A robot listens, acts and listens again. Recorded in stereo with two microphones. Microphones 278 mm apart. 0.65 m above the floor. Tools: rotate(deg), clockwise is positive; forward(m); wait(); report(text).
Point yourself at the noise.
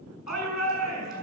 rotate(-90)
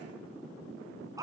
rotate(10)
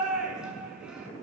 report("Facing the shout, over 4 m away.")